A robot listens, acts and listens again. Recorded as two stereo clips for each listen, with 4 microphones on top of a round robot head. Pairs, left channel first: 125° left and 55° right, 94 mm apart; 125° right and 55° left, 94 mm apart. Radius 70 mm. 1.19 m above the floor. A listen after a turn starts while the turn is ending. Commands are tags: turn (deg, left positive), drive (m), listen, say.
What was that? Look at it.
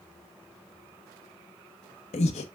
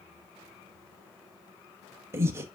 <turn deg="120"/>
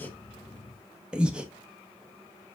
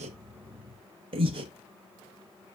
<turn deg="25"/>
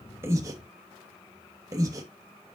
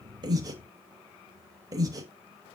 <say>Found it: breathing, straight ahead.</say>